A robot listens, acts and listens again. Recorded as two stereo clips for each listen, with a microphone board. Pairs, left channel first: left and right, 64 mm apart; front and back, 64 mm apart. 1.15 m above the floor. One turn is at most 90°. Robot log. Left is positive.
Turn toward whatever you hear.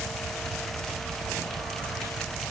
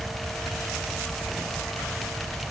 cmd idle
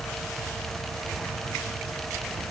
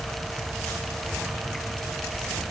cmd idle
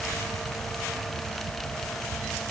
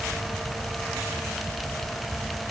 end: I can't make out anything.